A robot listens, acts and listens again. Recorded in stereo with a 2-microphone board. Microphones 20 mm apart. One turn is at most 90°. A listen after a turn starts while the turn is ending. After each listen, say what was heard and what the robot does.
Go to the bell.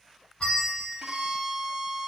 The bell: about 55° left or 125° left. Turn 55° left.
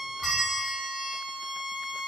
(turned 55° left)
Keep listening.
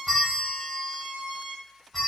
Drive 1.0 m forward.
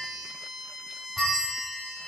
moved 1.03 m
Drive 1.0 m forward.
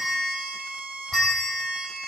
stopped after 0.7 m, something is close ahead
The bell is now 10° left. Turn 10° left.
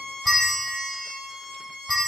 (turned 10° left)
Arrived at the bell, straight ahead.